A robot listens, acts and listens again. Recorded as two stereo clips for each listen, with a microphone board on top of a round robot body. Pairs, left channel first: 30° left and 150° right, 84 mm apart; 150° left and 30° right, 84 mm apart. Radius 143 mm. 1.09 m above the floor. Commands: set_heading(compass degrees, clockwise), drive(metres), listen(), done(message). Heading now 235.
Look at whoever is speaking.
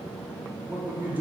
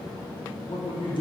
set_heading(95)
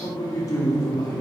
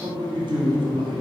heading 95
set_heading(110)
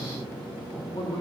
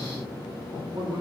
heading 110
done("Facing the man speaking.")